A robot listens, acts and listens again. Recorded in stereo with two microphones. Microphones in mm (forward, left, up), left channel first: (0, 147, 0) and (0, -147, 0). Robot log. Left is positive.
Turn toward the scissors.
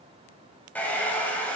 cmd idle
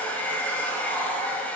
cmd idle
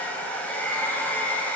end: I can't make out scissors, only a hair dryer.